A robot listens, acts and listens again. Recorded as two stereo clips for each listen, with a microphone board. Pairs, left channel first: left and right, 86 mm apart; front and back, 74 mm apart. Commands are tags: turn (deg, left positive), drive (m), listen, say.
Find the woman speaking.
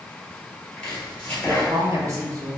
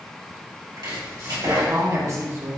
<turn deg="-135"/>
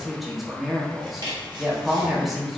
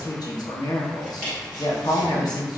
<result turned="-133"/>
<say>Facing the woman speaking, under 1 m away.</say>